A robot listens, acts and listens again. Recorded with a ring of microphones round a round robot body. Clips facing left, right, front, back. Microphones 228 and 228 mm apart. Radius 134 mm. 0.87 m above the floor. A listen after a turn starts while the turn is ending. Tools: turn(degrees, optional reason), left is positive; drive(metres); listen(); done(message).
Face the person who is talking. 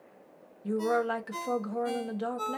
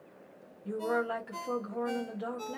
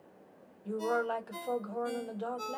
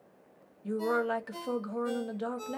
turn(degrees=120, reason="The woman speaking: 120° left.")
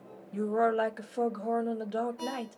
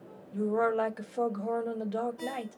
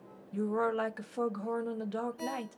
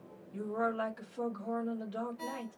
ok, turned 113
done("Facing the woman speaking, under 1 m away.")